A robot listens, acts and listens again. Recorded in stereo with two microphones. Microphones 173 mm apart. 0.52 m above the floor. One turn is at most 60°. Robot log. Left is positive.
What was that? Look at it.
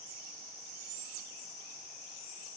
cmd idle
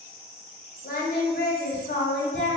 cmd yaw +60
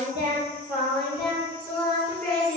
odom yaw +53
note: So it is at 10° left.
cmd yaw +10
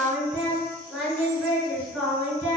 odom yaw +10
end: Facing the singing, 2 to 4 m away.